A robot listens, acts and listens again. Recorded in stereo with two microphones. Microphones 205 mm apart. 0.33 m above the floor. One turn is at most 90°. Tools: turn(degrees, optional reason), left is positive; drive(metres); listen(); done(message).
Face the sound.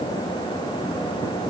listen()
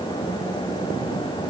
listen()
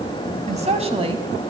turn(degrees=-25, reason="The woman speaking: about 25° right or 155° right.")
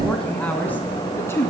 turn(degrees=10, reason="So it is at 10° left.")
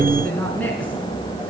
done("Found it: a woman speaking, straight ahead.")